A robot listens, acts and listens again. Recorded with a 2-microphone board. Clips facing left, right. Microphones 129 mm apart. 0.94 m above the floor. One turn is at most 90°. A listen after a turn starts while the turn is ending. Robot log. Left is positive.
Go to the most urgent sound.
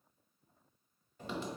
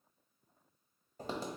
cmd idle
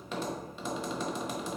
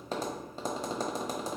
cmd idle
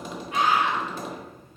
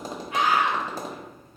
note: The scream: about 35° left or 145° left.
cmd yaw +35
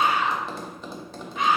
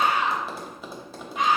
cmd fwd 1.0
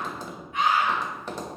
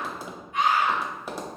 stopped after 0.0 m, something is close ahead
end: Something is in my way. I am facing the scream but have not reached it.